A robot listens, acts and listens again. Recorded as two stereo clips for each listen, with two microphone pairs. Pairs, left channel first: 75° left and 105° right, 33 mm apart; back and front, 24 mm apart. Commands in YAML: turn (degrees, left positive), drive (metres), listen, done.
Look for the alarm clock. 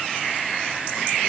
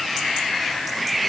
listen: true
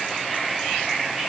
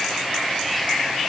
listen: true
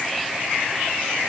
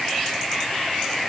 done: "I can't make out an alarm clock."